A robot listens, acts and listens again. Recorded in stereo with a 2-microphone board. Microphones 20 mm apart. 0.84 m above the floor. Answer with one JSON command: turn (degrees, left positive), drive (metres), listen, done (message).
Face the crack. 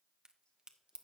{"turn": -50}
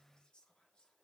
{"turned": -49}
{"listen": true}
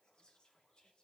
{"done": "I heard a crack, but can't make it out now. It was about straight ahead or 85° right."}